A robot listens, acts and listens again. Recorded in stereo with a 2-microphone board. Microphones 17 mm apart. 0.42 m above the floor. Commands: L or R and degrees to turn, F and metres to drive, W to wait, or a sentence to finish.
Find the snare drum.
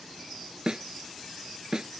R45
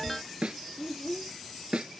R95
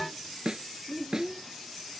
R45
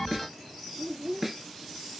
R10
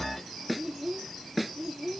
Facing the snare drum.